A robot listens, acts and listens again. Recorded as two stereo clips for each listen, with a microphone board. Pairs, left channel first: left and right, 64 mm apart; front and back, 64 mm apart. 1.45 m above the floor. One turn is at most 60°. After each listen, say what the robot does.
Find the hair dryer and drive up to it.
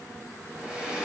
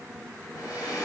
Keep listening.
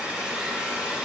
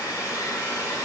Turn 15° right.
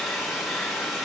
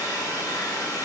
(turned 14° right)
Drive 1.0 m forward.
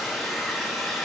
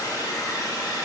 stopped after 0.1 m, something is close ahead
Something is in my way. I am facing the hair dryer but have not reached it.